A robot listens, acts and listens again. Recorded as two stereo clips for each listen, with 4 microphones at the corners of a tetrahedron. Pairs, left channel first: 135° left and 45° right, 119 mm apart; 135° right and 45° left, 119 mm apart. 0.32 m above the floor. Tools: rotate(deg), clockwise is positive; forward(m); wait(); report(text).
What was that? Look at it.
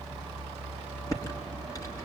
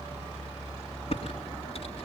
rotate(165)
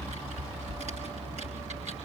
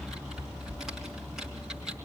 rotate(40)
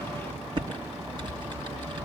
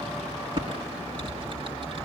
report("Found it: typing on a keyboard, straight ahead.")